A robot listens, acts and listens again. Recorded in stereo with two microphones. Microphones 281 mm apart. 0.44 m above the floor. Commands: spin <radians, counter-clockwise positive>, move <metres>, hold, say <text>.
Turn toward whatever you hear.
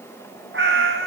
spin -0.79
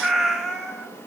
say Facing the cat meowing, 2 to 4 m away.